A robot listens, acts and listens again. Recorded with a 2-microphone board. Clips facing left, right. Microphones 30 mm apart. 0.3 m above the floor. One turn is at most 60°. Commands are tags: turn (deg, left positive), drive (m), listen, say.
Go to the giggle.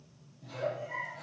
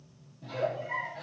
<turn deg="-30"/>
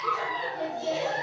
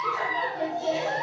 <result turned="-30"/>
<drive m="1.0"/>
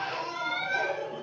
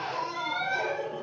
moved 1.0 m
<drive m="1.0"/>
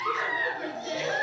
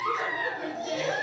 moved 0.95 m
<turn deg="10"/>
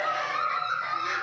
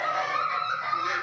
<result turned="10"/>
<drive m="1.0"/>
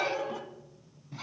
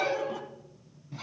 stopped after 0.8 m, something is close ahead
<say>Arrived at the giggle, straight ahead.</say>